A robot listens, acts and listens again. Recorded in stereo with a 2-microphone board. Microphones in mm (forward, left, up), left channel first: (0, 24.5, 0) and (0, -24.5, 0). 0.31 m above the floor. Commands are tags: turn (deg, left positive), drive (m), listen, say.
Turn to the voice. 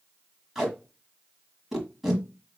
<listen/>
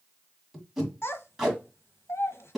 <turn deg="60"/>
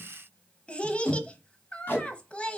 <turn deg="25"/>
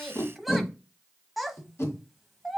<say>Found it: a child speaking, straight ahead.</say>